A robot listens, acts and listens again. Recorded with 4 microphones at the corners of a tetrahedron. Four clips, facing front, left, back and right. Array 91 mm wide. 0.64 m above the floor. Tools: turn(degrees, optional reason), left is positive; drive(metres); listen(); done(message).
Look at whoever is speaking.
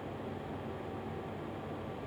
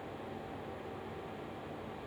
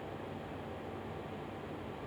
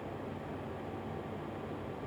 listen()
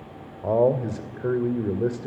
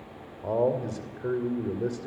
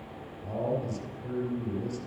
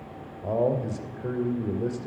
done("Facing the man speaking, 2 to 4 m away.")